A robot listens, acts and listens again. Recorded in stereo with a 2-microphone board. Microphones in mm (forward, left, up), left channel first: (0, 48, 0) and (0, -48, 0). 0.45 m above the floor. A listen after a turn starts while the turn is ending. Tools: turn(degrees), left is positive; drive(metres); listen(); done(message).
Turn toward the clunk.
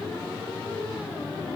listen()
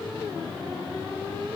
listen()
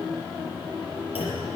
turn(degrees=90)
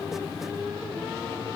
done("Facing where the clunk came from. I can't hear it now.")